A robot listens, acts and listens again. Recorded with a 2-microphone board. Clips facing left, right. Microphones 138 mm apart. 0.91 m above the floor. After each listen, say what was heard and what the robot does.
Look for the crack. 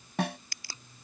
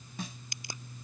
The crack: about 20° right or 160° right. Turn 20° right.
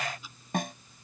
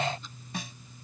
Keep listening.
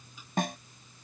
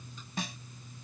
I heard a crack, but can't make it out now. It was about straight ahead or 140° right.